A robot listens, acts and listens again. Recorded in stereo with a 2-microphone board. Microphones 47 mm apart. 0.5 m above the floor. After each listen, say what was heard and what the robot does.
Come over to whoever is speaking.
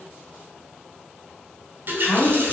Turn 30° right.
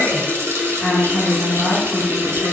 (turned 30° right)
So it is at 140° right. Turn 140° right.
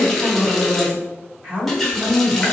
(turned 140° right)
The woman speaking is now 40° right. Turn 40° right.
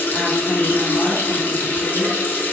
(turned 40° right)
Keep listening.
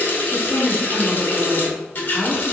Drive 1.0 m forward.
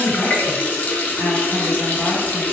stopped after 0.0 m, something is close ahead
Something is in my way. I am facing the woman speaking but have not reached it.